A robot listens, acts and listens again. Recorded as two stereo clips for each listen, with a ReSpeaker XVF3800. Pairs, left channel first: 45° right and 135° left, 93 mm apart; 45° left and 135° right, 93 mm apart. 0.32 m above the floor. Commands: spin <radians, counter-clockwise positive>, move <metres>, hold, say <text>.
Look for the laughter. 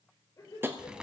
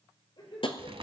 spin 0.17
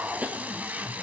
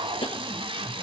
hold
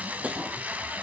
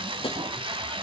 hold
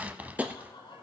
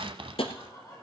spin -0.17
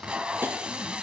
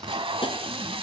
hold
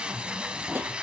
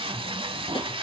hold
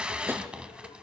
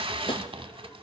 say I heard laughter from this way, but can't make it out now.